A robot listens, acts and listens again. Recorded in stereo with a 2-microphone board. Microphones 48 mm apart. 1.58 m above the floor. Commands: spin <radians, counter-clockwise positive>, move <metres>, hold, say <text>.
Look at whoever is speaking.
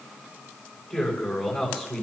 spin 0.52
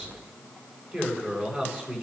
spin -0.52
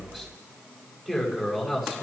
spin -0.17
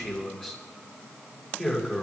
say Facing the man speaking, over 4 m away.